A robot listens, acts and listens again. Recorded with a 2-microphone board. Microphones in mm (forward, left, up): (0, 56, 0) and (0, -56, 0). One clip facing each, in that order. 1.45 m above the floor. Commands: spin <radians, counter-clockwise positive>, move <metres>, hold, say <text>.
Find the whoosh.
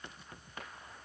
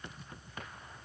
hold
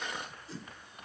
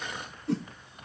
spin -1.13
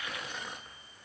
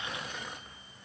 hold
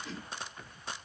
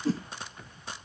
spin -0.70
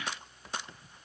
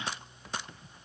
hold
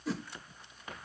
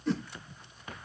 say Found it: a whoosh, straight ahead.